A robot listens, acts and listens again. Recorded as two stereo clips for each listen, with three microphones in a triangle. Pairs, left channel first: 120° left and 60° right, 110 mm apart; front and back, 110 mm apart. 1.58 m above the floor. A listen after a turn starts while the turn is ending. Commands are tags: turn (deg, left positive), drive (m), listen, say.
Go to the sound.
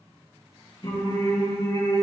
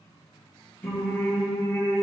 <turn deg="75"/>
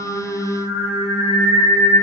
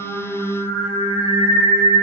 <drive m="1.0"/>
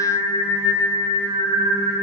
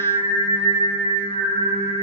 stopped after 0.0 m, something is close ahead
<say>Something is in my way. I am facing the singing but have not reached it.</say>